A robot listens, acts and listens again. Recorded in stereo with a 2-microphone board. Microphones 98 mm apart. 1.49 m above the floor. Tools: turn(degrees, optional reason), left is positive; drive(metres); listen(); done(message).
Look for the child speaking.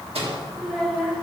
turn(degrees=30)
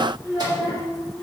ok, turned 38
turn(degrees=160, reason="So it is at 160° left.")
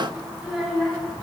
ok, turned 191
done("Facing the child speaking.")